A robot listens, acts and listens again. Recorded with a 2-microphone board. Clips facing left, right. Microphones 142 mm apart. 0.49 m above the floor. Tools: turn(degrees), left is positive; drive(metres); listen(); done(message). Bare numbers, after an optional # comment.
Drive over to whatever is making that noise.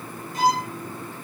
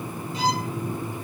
# The violin: about 50° left or 130° left.
turn(50)
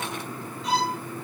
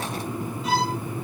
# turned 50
drive(1.0)
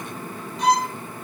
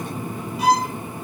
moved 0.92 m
drive(1.0)
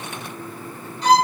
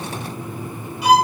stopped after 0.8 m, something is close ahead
# The violin is now 10° right.
turn(-10)
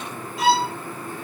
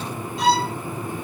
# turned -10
done("Arrived at the violin, straight ahead.")